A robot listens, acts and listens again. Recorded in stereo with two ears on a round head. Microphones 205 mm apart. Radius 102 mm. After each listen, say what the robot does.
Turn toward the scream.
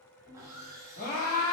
Turn 35° left.
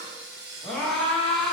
Found it: a scream, straight ahead, 2 to 4 m away.